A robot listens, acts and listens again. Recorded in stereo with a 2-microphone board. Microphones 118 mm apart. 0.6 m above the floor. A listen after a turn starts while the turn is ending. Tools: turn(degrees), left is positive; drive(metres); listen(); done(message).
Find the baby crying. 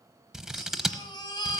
turn(degrees=40)
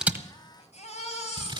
turn(degrees=100)
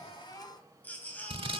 turn(degrees=15)
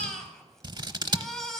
done("Facing the baby crying.")